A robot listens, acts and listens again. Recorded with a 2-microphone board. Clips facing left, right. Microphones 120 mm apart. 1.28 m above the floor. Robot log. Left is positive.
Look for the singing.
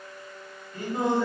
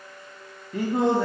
note: The singing: about 65° right or 115° right.
cmd yaw -65
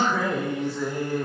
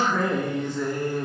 note: So it is at 15° left.
cmd yaw +15
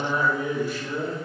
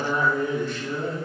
note: The singing is now 10° left.
cmd yaw +10
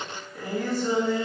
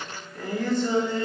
note: The singing is now 10° left.
cmd yaw +10
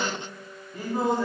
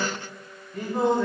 end: Facing the singing.